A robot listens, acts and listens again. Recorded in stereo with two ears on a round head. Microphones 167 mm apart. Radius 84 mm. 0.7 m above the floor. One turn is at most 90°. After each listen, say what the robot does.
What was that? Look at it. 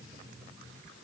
Keep listening.
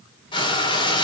Turn 25° left.
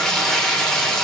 Found it: frying, straight ahead.